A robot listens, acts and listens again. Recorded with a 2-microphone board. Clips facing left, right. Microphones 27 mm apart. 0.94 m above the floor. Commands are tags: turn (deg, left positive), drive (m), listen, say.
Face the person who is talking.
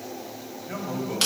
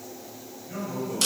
<turn deg="50"/>
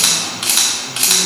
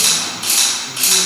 <listen/>
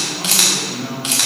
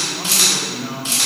<say>Found it: a man speaking, straight ahead, 1 to 2 m away.</say>